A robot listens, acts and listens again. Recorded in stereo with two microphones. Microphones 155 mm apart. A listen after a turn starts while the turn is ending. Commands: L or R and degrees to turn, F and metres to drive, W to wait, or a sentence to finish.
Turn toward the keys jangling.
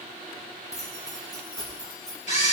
L30
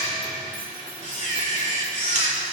W
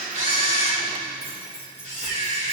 L95
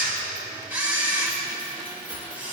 W
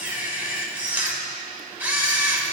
W
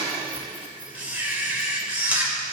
Facing where the keys jangling came from. I can't hear it now.